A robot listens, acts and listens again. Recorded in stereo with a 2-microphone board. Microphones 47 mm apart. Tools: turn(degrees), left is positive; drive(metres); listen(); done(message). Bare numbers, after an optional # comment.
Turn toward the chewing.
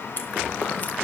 # The chewing: about 40° left or 140° left.
turn(40)
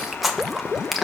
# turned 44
done("Found it: chewing, straight ahead, 1 to 2 m away.")